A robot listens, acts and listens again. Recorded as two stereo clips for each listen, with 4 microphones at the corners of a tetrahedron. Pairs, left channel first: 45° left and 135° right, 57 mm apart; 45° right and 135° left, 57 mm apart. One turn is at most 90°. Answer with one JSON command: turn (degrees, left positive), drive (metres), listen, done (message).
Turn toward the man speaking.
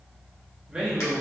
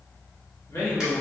{"turn": -55}
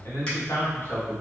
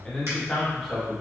{"turn": 45}
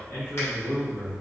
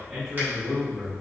{"turn": 65}
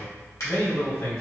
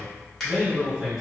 {"turn": 45}
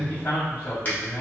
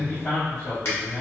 {"done": "Facing the man speaking."}